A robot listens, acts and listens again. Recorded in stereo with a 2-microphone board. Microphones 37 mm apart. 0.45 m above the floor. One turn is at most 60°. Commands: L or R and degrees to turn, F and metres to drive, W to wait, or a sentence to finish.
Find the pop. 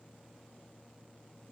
W
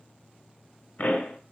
L55
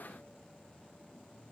W
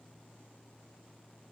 I heard a pop, but can't make it out now. It was about straight ahead or 70° left.